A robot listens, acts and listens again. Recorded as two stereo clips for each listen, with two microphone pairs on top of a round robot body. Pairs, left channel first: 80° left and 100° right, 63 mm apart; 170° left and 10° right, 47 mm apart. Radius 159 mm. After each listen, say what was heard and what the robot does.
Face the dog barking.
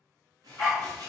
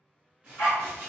The dog barking: 155° left. Turn 155° left.
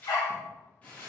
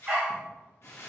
The dog barking is now 55° left. Turn 55° left.
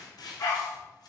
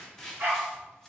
The dog barking is now 45° left. Turn 45° left.
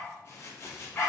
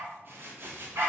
The dog barking is now 15° left. Turn 15° left.
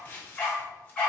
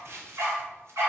Found it: a dog barking, straight ahead.